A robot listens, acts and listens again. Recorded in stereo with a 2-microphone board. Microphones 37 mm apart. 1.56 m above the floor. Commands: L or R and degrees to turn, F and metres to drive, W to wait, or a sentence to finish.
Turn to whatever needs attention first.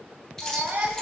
R50
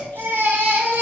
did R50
R75
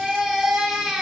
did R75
R10
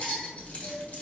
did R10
W
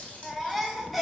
Facing the baby crying, 1 to 2 m away.